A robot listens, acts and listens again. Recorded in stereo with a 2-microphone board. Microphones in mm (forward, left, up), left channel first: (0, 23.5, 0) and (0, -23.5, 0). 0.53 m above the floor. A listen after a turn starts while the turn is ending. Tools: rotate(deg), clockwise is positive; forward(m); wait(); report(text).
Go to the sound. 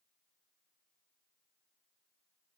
wait()
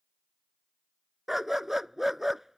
rotate(30)
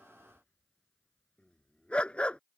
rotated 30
rotate(-25)
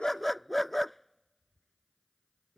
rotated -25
forward(1.0)
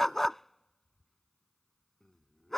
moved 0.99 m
rotate(-10)
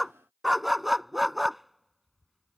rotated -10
forward(1.0)
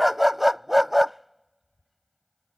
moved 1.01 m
forward(1.0)
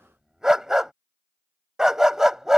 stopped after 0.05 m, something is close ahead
rotate(10)
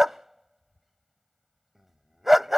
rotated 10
report("Arrived at the dog barking, straight ahead.")